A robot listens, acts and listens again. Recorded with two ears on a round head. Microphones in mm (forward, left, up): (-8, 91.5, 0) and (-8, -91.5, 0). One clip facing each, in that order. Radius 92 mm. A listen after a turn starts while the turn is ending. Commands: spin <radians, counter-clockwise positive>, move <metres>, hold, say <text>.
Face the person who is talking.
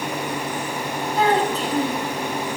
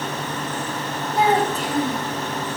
spin -0.52
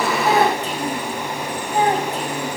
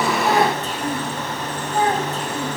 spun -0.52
spin 0.26
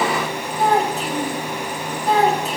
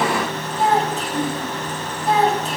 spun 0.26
say Found it: a child speaking, straight ahead.